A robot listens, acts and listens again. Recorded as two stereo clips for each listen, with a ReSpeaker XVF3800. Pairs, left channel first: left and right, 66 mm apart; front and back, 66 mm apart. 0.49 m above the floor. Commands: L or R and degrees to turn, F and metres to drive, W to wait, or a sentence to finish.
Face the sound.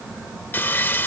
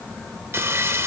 L140
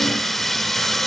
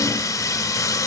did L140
Facing the sawing.